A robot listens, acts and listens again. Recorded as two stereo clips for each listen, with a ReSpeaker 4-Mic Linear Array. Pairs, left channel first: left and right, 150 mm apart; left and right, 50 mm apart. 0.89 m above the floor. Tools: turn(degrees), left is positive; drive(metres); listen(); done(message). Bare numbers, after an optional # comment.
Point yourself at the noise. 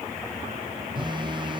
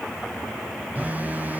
# The phone buzzing: about 30° right or 150° right.
turn(-30)
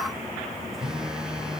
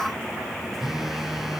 done("Facing the phone buzzing.")